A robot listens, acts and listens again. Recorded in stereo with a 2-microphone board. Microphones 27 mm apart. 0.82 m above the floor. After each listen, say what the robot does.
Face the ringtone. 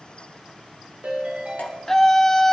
Turn 65° right.
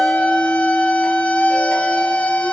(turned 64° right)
Keep listening.
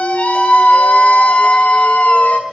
Keep listening.
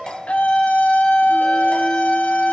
I heard a ringtone, but can't make it out now. It was about straight ahead or 55° right.